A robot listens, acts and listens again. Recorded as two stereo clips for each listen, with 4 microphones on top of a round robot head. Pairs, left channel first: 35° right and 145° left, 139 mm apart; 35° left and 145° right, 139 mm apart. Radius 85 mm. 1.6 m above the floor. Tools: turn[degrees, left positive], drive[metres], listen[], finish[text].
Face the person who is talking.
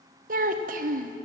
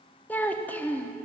Thought: The child speaking: 115° left.
Action: turn[115]
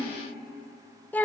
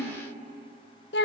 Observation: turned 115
Thought: The child speaking is now 40° left.
Action: turn[40]
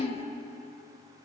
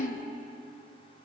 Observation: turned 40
Thought: The child speaking is now 10° left.
Action: turn[10]
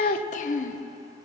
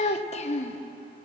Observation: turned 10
Action: finish[Found it: a child speaking, straight ahead, under 1 m away.]